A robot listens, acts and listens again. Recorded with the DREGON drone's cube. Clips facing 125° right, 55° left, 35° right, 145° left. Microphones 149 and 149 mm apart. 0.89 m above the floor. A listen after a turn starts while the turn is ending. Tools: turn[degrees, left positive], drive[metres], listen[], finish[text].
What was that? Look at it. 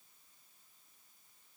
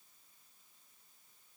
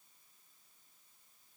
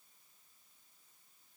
Action: listen[]
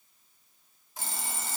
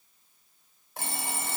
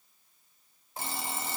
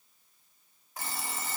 Thought: The alarm clock: 30° left.
Action: turn[30]
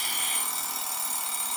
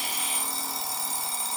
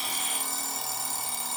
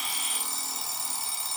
Action: finish[Facing the alarm clock.]